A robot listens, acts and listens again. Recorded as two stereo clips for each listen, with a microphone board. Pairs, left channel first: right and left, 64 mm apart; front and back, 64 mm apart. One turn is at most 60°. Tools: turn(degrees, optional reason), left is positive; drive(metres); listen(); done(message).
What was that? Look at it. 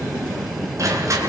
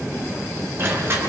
turn(degrees=60, reason="The crushing: 130° left.")
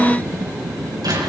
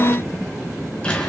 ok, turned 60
turn(degrees=60, reason="The crushing is now 75° left.")
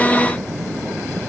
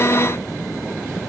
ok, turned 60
turn(degrees=15, reason="Nothing new. It was at 15° left.")
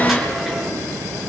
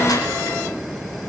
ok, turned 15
listen()
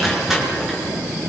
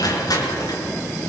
done("Found it: crushing, straight ahead, over 4 m away.")